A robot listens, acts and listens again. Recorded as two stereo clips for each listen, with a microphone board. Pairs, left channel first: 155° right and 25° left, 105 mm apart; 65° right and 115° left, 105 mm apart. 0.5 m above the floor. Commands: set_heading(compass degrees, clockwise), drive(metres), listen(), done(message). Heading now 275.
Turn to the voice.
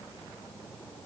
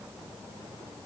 listen()
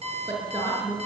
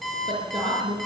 set_heading(195)
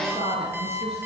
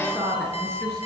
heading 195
set_heading(180)
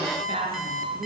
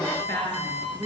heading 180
done("Found it: a woman speaking, straight ahead, over 4 m away.")